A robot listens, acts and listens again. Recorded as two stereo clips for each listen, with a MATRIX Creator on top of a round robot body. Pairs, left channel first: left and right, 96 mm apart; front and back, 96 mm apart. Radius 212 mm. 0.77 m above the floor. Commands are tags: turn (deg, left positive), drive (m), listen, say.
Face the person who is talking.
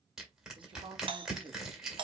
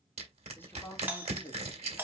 <turn deg="-60"/>
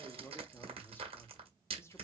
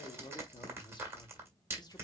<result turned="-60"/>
<turn deg="35"/>
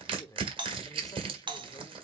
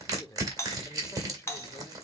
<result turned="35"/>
<turn deg="40"/>
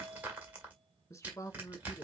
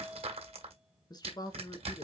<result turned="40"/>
<turn deg="35"/>
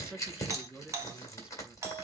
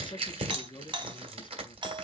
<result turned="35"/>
<turn deg="-10"/>
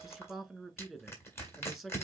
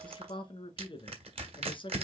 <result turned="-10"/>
<say>Found it: a man speaking, straight ahead.</say>